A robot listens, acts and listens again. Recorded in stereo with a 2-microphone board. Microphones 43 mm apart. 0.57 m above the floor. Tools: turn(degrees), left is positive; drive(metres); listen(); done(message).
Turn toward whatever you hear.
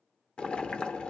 turn(degrees=25)
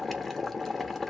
done("Facing the boiling.")